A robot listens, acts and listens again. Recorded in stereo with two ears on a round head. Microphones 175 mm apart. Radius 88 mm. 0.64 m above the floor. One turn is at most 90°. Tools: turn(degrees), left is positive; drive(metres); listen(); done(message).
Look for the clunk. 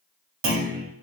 turn(degrees=-50)
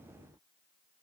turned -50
listen()
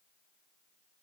done("I heard a clunk, but can't make it out now. It was about straight ahead or 80° right.")